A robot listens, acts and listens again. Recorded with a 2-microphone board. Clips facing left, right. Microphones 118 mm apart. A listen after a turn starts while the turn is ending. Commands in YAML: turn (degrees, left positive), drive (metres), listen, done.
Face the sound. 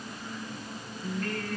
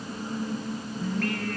turn: -70
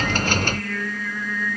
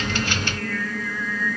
done: "Facing the singing, over 4 m away."